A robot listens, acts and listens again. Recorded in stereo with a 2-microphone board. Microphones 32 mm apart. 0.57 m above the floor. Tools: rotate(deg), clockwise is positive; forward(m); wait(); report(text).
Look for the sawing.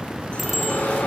rotate(-65)
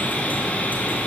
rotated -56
rotate(-55)
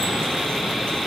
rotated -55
report("Facing the sawing, over 4 m away.")